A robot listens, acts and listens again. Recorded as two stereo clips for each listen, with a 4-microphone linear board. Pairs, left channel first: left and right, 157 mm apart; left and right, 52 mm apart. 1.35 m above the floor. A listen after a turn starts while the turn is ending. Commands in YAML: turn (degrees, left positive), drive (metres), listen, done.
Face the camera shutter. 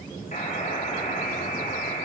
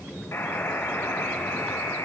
listen: true
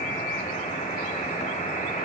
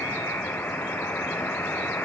listen: true
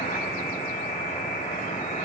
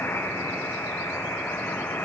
done: "I can't make out a camera shutter, only a buzzer."